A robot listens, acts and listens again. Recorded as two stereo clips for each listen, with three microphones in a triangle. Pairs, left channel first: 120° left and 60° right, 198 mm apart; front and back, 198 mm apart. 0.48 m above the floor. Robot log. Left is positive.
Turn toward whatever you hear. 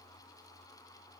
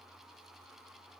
cmd idle
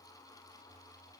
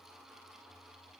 cmd idle
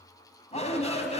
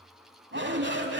note: The shout: 175° left.
cmd yaw +175
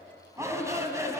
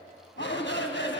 note: The shout is now 15° left.
cmd yaw +15
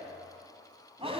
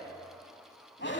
end: Facing the shout, over 4 m away.